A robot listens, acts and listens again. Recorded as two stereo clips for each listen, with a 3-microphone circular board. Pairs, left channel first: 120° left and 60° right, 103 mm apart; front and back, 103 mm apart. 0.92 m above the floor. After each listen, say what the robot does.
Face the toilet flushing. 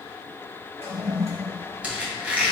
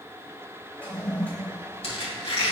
Turn 75° right.
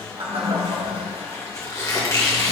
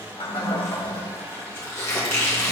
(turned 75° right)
Turn 30° right.
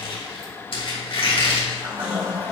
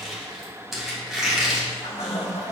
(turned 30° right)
Found it: a toilet flushing, straight ahead, 1 to 2 m away.